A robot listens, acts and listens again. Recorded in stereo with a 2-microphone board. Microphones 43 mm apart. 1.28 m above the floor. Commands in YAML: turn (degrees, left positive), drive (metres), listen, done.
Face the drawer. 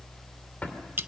turn: 35
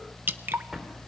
done: "Facing the drawer, 2 to 4 m away."